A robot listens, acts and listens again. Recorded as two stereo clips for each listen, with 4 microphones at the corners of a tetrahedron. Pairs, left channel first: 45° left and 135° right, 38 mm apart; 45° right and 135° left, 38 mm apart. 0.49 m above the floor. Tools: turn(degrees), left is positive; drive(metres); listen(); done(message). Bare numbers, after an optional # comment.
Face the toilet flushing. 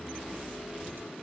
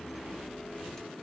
listen()
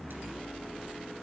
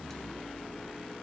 listen()
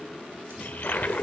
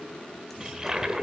# The toilet flushing: 65° left.
turn(65)
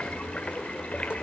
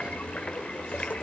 done("Found it: a toilet flushing, straight ahead, 1 to 2 m away.")